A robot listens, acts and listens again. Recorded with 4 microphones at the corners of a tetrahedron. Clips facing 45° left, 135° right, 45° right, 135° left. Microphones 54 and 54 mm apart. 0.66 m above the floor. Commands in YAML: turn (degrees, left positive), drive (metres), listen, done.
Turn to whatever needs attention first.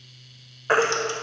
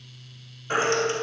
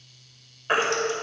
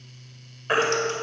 turn: 50
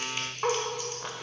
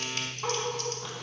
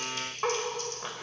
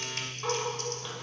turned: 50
listen: true
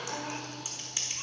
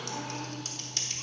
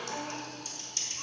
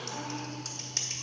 listen: true
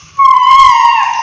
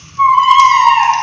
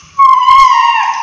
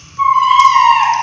done: "Found it: a baby crying, straight ahead."